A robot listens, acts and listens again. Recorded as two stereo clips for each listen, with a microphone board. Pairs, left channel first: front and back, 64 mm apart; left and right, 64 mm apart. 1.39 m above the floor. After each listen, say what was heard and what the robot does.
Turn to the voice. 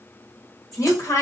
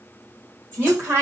The woman speaking: 45° right. Turn 45° right.
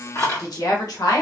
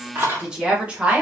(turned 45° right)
The woman speaking is now 20° right. Turn 20° right.
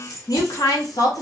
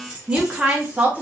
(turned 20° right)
The woman speaking is now 25° right. Turn 25° right.
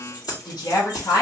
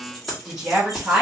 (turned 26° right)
The woman speaking is now 20° right. Turn 20° right.
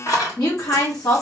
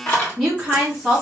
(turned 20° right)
Found it: a woman speaking, straight ahead, 1 to 2 m away.